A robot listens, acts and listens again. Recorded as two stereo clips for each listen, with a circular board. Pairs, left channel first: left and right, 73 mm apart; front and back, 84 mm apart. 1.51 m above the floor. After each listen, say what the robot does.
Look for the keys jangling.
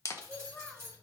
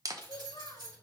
Turn 150° right.
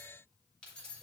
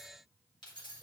Turn 15° left.
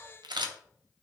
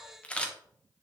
Keep listening.
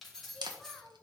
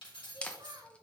Facing the keys jangling.